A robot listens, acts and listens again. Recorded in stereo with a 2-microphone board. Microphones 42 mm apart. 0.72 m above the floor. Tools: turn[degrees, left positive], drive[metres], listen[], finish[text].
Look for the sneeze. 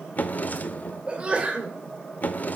Thought: The sneeze: about 30° right or 150° right.
Action: turn[-30]
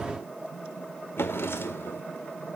Action: listen[]
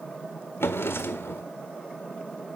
Action: finish[I heard a sneeze, but can't make it out now. It was about straight ahead or 120° right.]